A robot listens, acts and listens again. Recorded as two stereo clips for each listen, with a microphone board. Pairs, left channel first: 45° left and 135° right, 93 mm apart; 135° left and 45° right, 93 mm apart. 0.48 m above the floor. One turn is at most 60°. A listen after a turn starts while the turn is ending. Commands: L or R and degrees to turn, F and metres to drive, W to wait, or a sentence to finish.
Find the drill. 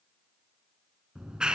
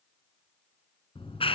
W
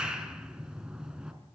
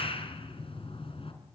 W
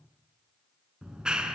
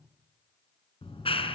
I can't make out a drill to turn to.